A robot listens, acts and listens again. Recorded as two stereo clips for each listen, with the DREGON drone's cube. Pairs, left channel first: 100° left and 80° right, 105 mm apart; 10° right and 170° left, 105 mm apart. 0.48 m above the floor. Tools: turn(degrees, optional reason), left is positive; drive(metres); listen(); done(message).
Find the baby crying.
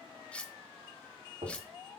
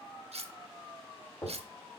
listen()
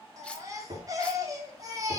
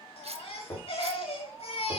turn(degrees=-25, reason="The baby crying: 25° right.")
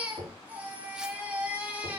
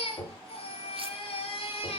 done("Facing the baby crying, 1 to 2 m away.")